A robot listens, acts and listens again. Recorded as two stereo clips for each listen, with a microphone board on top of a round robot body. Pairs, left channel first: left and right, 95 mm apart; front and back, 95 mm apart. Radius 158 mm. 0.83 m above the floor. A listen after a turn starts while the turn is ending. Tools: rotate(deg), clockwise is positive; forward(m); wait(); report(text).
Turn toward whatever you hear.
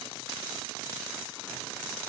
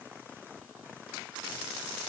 wait()
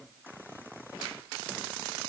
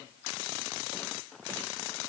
wait()
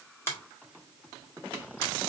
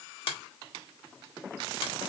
rotate(-25)
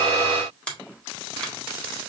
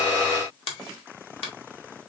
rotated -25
rotate(-10)
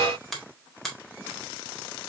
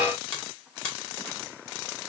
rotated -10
report("Facing the finger snap, 1 to 2 m away.")